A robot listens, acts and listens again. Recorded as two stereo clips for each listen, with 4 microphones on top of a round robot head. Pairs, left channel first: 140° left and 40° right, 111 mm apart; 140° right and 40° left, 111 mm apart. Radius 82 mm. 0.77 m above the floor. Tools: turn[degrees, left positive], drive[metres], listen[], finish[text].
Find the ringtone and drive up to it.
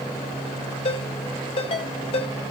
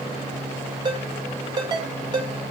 Thought: The ringtone: 95° left.
Action: turn[95]
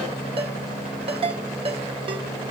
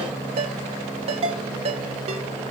Action: drive[1.0]
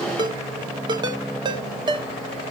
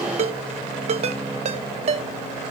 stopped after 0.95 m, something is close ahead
Thought: The ringtone is now 10° left.
Action: turn[10]
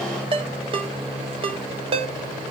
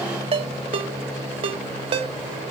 Action: finish[Arrived at the ringtone, straight ahead.]